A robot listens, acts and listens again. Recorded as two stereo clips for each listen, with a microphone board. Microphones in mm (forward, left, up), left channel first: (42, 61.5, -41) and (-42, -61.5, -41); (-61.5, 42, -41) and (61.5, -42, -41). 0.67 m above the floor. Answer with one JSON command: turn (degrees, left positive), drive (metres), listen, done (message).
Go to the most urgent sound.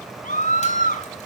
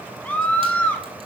{"turn": 65}
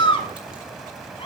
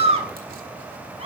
{"drive": 1.0}
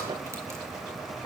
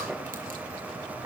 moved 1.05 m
{"listen": true}
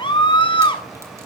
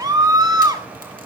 {"turn": 20}
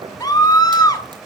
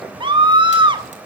{"drive": 1.0}
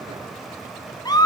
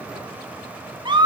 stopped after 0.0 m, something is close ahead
{"done": "I am next to the scream."}